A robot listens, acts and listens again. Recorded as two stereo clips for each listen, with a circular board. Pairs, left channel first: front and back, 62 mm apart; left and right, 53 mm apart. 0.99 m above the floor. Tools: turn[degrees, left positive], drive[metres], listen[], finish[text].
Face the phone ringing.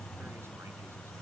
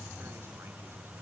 Action: listen[]
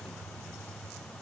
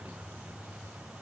Action: listen[]
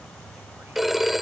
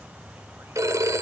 Thought: The phone ringing: 95° right.
Action: turn[-95]
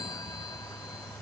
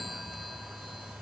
Action: listen[]
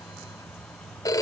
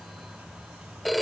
Action: finish[Found it: a phone ringing, straight ahead.]